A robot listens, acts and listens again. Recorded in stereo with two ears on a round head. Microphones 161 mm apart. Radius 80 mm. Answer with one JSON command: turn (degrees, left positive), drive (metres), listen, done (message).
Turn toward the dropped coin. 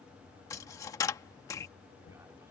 {"turn": 15}
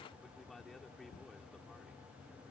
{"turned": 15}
{"listen": true}
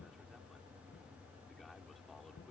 {"done": "I heard a dropped coin, but can't make it out now. It was about straight ahead or 150° left."}